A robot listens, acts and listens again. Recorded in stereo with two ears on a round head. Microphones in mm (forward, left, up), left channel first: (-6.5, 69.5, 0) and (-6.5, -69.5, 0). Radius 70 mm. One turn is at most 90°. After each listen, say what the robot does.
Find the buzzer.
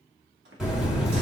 Turn 30° right.
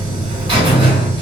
Turn 90° right.
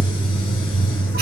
Turn 65° right.
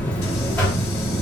Turn 10° left.
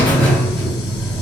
Facing the buzzer, 1 to 2 m away.